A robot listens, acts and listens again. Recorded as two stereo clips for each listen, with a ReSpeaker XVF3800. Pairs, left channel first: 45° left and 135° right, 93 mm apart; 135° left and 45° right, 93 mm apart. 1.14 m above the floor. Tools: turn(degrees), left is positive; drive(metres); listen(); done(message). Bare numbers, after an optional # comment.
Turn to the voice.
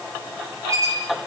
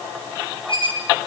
listen()
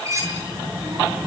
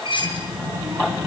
# The child speaking: 105° right.
turn(-105)
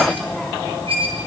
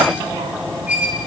# The child speaking is now 30° right.
turn(-30)
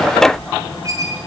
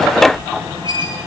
done("Found it: a child speaking, straight ahead, over 4 m away.")